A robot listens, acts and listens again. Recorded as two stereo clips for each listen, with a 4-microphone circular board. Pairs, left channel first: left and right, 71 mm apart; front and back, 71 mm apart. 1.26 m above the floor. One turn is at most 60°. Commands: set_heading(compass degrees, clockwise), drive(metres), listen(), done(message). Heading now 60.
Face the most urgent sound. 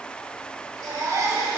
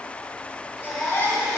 set_heading(120)
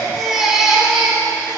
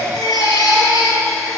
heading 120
set_heading(130)
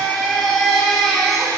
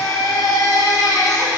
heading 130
done("Found it: a baby crying, straight ahead, 1 to 2 m away.")